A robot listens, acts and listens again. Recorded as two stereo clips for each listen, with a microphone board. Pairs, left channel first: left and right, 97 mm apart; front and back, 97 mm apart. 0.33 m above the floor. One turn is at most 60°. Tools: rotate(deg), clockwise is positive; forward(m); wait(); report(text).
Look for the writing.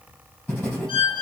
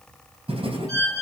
rotate(-60)
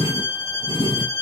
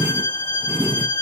rotate(-60)
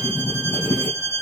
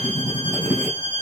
rotate(-60)
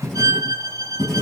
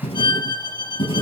report("Found it: writing, straight ahead.")